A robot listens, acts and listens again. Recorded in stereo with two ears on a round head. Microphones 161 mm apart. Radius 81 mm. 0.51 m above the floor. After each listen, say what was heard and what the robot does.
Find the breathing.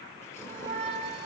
Keep listening.
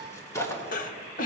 The breathing: about 45° left or 135° left. Turn 45° left.
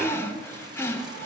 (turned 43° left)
So it is at 15° left. Turn 15° left.
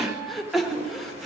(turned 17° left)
Found it: breathing, straight ahead.